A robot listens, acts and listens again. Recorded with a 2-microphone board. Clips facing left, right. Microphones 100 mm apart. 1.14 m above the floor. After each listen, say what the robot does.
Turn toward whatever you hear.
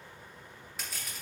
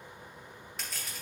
Turn 30° left.
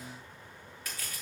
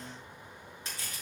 Turn 30° right.
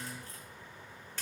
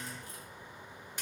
Turn 15° right.
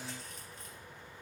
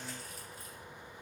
Keep listening.
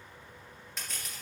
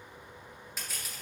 Found it: crushing, straight ahead.